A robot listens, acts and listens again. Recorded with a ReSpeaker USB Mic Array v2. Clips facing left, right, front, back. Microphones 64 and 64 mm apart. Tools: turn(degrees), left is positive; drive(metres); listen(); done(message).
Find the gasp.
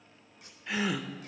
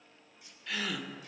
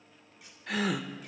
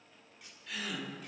turn(degrees=20)
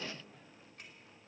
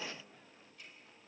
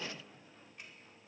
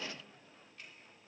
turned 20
done("Facing where the gasp came from. I can't hear it now.")